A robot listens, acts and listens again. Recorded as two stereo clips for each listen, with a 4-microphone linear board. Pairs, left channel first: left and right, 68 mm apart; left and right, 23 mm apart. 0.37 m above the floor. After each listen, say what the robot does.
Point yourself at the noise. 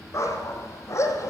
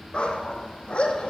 Turn 45° left.
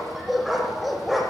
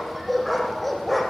Found it: a dog barking, straight ahead.